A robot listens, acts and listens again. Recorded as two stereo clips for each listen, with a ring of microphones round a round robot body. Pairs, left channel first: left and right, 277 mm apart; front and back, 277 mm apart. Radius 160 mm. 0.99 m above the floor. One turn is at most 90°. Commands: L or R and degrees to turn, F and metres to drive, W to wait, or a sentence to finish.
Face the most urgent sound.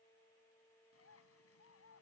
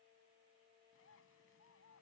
W
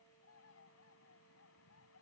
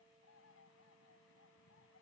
W
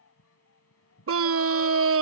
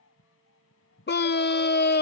R50
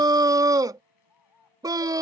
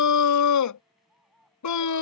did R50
R15
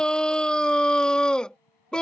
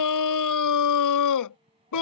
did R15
Found it: a scream, straight ahead.